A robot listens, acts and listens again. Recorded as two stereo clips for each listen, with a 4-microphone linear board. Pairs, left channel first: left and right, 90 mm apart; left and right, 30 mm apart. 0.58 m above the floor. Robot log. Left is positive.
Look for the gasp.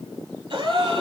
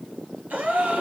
note: The gasp: about 65° right or 115° right.
cmd yaw -65
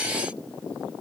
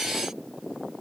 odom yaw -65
cmd idle
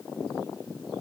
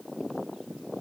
end: I heard a gasp, but can't make it out now. It was about straight ahead or 50° right.